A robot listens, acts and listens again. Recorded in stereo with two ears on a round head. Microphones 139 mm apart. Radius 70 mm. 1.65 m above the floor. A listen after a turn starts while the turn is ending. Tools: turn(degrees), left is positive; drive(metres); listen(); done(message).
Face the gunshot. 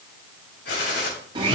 turn(degrees=90)
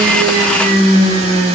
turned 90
done("I heard a gunshot from this way, but can't make it out now.")